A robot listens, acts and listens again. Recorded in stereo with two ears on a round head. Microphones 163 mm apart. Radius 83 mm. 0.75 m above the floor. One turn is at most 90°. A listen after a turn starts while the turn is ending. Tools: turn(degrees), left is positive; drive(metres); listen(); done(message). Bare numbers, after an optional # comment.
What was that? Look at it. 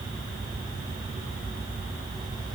listen()
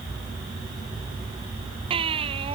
# The baby crying: about 30° right or 150° right.
turn(-30)
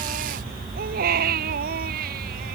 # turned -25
# So it is at 120° right.
turn(-90)
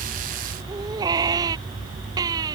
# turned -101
# The baby crying is now 20° right.
turn(-20)
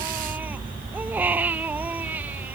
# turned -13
# The baby crying is now 10° right.
turn(-10)
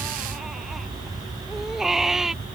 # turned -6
done("Facing the baby crying.")